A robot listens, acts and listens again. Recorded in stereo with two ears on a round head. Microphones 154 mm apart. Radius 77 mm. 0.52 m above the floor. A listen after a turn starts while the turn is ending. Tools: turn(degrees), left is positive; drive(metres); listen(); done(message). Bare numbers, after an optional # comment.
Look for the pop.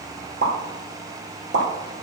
# The pop: about 75° right or 105° right.
turn(-75)
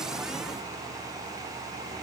listen()
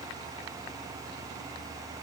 done("I heard a pop, but can't make it out now. It was about straight ahead or 30° right.")